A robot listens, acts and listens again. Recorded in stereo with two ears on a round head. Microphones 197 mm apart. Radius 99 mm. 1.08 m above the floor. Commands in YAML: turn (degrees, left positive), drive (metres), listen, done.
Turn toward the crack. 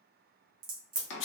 turn: -40
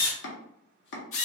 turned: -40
listen: true
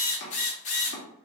done: "I heard a crack, but can't make it out now. It was about straight ahead or 100° right."